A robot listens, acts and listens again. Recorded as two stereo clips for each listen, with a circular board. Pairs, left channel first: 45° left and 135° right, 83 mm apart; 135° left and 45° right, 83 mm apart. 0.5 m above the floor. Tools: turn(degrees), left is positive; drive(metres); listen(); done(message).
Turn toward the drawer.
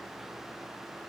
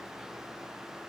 listen()
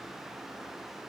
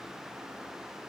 listen()
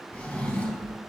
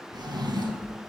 turn(degrees=-30)
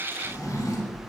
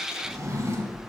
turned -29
done("Found it: a drawer, straight ahead, 2 to 4 m away.")